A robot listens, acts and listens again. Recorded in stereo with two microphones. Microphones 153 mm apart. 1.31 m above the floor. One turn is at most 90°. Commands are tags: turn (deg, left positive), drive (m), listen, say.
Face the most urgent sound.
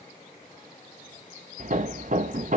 <listen/>
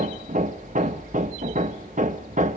<listen/>
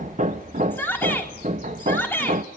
<turn deg="30"/>
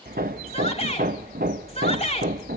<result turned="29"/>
<turn deg="90"/>
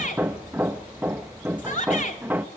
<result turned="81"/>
<turn deg="55"/>
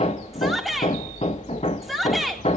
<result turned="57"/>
<say>Facing the shout.</say>